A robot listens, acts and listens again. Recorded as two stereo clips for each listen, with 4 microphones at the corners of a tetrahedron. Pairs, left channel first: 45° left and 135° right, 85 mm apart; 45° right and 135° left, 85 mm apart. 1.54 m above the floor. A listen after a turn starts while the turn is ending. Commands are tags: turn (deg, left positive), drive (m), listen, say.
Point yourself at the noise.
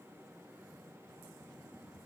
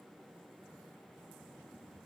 <listen/>
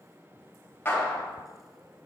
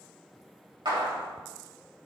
<turn deg="110"/>
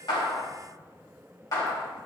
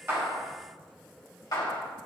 <say>Facing the clap, 2 to 4 m away.</say>